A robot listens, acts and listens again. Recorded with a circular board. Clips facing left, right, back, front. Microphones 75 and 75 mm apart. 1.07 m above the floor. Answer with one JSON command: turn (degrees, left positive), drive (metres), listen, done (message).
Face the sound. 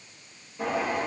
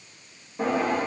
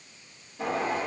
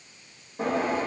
{"turn": -50}
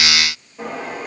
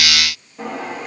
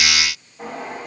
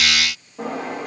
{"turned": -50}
{"done": "Facing the drawer."}